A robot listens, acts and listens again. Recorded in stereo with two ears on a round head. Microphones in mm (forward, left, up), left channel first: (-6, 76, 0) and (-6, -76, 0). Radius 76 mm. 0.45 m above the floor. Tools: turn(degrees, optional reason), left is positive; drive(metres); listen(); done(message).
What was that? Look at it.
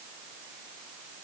listen()
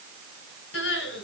turn(degrees=90)
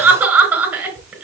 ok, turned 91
turn(degrees=-10, reason="So it is at 10° right.")
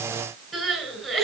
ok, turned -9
done("Found it: crying, straight ahead, over 4 m away.")